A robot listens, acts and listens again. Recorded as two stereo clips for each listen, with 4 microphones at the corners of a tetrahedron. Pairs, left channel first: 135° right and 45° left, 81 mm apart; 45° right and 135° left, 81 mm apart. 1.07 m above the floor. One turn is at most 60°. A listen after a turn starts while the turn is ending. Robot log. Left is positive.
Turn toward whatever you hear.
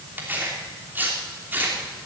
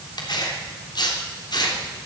note: The tearing paper: 20° right.
cmd yaw -20
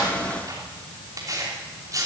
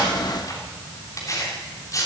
end: Facing the tearing paper, 2 to 4 m away.